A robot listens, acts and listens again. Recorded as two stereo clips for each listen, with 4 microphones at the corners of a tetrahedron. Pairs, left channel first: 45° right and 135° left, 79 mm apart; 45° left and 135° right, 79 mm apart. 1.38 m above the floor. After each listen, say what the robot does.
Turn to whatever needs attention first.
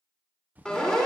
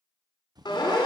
Turn 40° left.
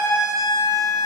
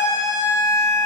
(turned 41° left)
Found it: a siren, straight ahead.